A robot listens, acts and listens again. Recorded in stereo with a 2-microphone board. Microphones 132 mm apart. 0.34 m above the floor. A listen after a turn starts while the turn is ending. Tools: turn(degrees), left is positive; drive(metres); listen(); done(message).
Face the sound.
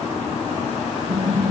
turn(degrees=-90)
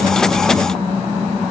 done("Found it: typing on a keyboard, straight ahead, over 4 m away.")